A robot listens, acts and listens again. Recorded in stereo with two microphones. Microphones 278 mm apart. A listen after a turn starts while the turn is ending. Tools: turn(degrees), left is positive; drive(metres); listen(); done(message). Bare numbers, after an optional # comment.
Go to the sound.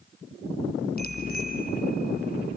# The bicycle bell: about 35° left or 145° left.
turn(35)
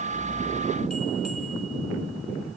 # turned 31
listen()
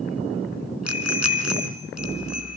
# So it is at 115° left.
turn(115)
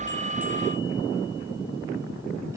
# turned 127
# Nothing new. It was at 10° right.
turn(-10)
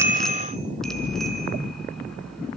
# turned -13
drive(1.0)
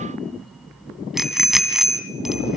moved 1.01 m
drive(1.0)
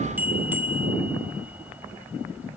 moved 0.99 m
drive(1.0)
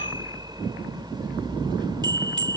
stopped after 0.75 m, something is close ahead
# The bicycle bell is now 15° right.
turn(-15)
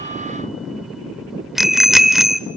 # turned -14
done("I am next to the bicycle bell.")